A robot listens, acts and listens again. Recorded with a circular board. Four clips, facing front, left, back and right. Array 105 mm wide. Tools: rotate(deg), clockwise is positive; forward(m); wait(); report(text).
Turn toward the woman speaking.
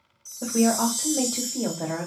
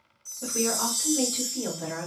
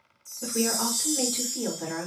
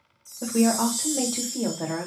rotate(45)
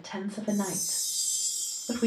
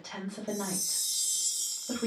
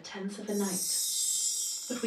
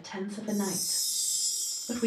report("Facing the woman speaking.")